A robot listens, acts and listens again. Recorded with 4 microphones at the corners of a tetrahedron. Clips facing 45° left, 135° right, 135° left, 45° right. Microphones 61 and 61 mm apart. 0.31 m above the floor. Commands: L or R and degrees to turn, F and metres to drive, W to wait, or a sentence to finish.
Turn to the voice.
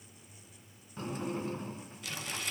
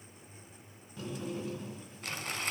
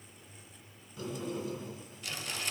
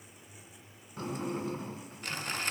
W
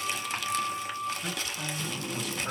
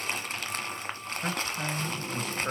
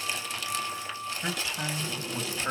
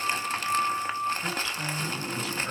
L180
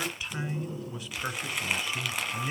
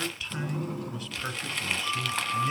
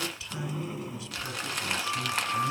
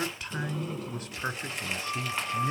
R25
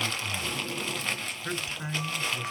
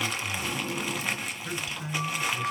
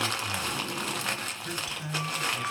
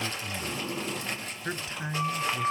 Facing the man speaking.